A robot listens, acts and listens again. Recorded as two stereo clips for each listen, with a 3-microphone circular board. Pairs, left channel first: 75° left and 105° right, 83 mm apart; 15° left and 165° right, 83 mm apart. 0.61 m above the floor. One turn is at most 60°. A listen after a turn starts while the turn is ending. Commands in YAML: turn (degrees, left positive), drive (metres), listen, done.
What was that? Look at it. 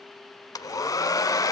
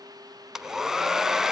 turn: 60
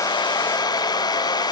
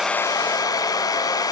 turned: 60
turn: 50
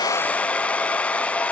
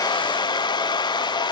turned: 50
done: "Facing the hair dryer."